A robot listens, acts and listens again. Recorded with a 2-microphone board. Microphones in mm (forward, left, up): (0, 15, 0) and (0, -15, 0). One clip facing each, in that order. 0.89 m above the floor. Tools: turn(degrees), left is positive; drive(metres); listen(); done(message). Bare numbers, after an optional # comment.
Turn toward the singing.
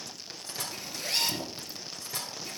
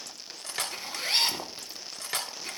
listen()
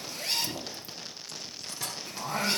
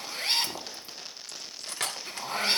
# The singing: about 30° right or 150° right.
turn(-30)
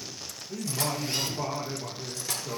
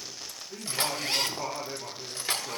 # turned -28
done("Found it: singing, straight ahead, over 4 m away.")